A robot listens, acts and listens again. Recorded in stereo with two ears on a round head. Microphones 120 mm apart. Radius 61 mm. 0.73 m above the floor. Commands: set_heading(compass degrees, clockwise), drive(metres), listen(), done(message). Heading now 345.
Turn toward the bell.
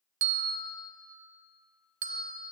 set_heading(45)
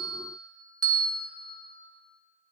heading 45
set_heading(80)
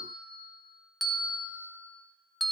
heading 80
done("Found it: a bell, straight ahead, 1 to 2 m away.")